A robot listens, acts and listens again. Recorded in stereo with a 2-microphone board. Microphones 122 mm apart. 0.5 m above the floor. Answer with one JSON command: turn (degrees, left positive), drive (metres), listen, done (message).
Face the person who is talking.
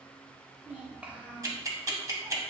{"turn": -30}
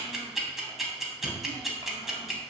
{"listen": true}
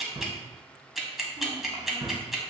{"listen": true}
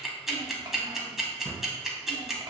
{"done": "I heard a child speaking, but can't make it out now. It was about 20° left or 140° right."}